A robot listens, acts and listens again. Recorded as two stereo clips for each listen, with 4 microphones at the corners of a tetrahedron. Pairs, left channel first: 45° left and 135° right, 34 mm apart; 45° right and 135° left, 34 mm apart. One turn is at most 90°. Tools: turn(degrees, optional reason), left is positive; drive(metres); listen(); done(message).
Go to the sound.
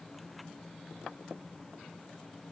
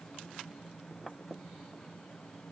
listen()
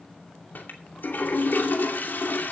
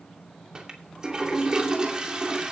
turn(degrees=70, reason="The toilet flushing: 70° left.")
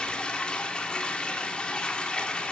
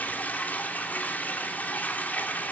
turn(degrees=-15, reason="The toilet flushing is now 15° right.")
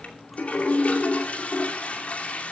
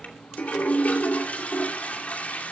drive(metres=1.0)
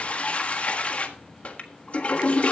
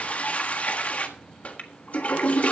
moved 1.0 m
drive(metres=1.0)
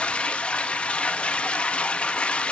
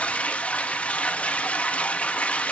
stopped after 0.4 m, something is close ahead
done("Arrived at the toilet flushing, straight ahead.")